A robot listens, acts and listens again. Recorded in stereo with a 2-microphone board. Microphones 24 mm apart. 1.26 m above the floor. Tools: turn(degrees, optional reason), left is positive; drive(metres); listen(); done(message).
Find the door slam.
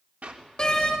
turn(degrees=30, reason="The door slam: about 30° left or 150° left.")
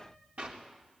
listen()
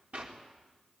done("I heard a door slam, but can't make it out now. It was about straight ahead or 120° left.")